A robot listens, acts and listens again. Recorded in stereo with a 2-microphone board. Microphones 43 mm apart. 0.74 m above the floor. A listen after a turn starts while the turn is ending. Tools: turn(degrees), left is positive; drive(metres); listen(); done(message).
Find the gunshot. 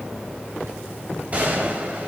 turn(degrees=-35)
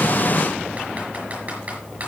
listen()
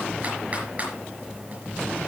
done("I heard a gunshot, but can't make it out now. It was about straight ahead or 110° right.")